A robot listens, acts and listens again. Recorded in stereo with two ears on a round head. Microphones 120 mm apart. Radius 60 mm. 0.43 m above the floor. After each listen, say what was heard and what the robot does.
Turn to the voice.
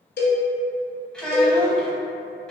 Turn 30° left.
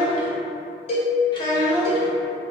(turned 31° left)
So it is at 140° left. Turn 140° left.
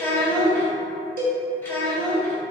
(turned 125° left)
The child speaking is now 15° left. Turn 15° left.
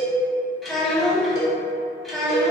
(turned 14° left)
Found it: a child speaking, straight ahead, 1 to 2 m away.